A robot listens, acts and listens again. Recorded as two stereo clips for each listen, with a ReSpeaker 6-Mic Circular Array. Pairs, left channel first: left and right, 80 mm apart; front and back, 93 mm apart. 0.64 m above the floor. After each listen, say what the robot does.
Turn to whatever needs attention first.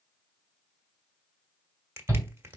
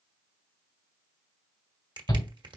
Turn 40° right.
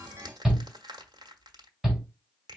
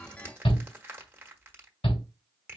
Facing the shout.